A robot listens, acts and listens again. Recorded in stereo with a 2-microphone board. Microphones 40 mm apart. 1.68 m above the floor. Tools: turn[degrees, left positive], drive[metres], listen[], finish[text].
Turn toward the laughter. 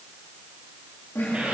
Action: turn[90]
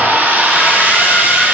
Action: finish[Found it: laughter, straight ahead, 2 to 4 m away.]